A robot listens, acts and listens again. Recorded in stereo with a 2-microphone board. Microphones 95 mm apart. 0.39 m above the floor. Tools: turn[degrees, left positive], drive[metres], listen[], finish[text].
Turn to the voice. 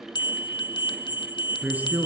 Action: turn[-30]
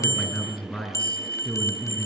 Thought: So it is at 15° left.
Action: turn[15]
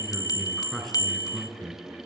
Action: finish[Found it: a man speaking, straight ahead, over 4 m away.]